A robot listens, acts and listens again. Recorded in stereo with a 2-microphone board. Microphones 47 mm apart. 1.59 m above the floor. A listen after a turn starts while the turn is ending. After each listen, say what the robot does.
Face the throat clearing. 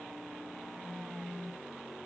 Keep listening.
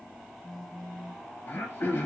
Turn 55° left.
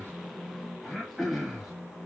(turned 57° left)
Facing the throat clearing.